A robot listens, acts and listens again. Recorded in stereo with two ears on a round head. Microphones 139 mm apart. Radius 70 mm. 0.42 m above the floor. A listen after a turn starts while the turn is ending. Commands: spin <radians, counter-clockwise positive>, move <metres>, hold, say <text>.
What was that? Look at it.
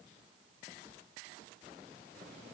hold
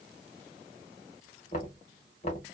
spin 0.87
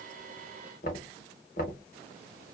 spin 1.31
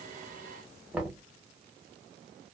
say Found it: knocking, straight ahead.